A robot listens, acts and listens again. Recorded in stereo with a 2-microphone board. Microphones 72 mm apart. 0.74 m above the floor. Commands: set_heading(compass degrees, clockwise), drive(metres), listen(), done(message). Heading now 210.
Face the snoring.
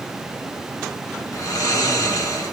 set_heading(155)
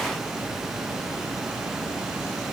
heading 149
listen()
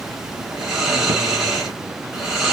done("Found it: snoring, straight ahead.")